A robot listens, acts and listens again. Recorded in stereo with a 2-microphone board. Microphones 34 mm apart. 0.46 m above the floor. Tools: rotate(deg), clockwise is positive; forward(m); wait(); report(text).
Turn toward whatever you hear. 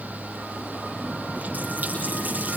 rotate(55)
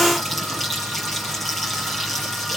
report("Facing the running tap, over 4 m away.")